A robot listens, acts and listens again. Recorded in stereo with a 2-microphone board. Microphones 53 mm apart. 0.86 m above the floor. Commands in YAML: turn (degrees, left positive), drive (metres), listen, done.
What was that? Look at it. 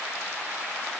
listen: true
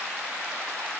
listen: true
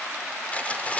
turn: 25
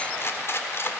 turn: 135
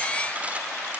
listen: true
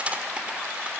turn: -20
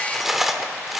done: "Found it: cutlery clinking, straight ahead, 1 to 2 m away."